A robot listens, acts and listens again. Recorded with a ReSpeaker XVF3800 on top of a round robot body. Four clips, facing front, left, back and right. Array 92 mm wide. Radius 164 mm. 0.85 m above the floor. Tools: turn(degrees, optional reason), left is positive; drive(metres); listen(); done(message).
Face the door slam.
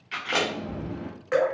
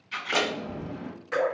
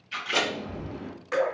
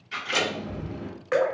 turn(degrees=30, reason="The door slam: 30° left.")
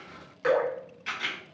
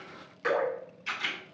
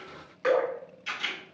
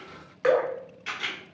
done("I heard a door slam from this way, but can't make it out now.")